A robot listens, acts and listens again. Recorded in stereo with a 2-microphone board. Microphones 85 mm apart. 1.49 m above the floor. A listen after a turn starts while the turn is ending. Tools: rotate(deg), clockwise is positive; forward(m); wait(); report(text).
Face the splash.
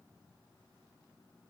wait()
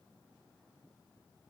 wait()
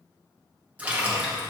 rotate(15)
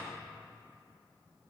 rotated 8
wait()
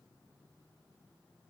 report("I heard a splash, but can't make it out now. It was about 10° right or 155° right.")